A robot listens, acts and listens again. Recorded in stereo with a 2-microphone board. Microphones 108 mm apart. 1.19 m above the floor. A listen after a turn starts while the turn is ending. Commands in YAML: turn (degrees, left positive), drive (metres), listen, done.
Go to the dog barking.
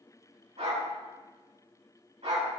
turn: -90
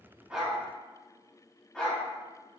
drive: 1.0
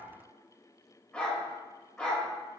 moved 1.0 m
turn: 10
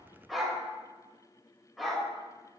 drive: 1.0
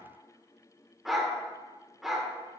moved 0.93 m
drive: 1.0
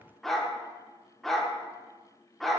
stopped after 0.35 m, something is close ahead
done: "I am next to the dog barking."